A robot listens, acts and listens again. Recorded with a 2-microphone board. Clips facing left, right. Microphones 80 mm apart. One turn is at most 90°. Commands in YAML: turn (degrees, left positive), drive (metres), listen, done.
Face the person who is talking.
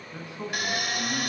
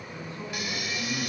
turn: 20
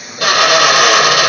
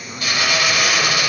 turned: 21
listen: true
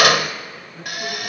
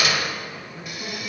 turn: 30
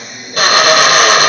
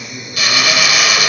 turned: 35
listen: true
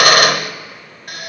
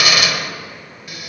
listen: true
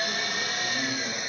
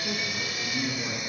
turn: -25
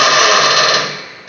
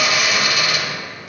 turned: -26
listen: true
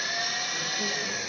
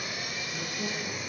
listen: true
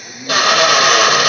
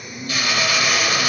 done: "Facing where the man speaking came from. I can't hear it now."